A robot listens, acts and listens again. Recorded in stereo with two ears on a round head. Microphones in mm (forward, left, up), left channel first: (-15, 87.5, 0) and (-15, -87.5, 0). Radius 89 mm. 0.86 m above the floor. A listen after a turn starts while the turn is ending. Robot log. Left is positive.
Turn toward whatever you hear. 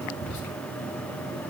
note: The whispering: about 55° left or 125° left.
cmd yaw +55
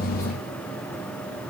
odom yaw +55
cmd idle
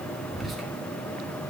end: Found it: whispering, straight ahead, 2 to 4 m away.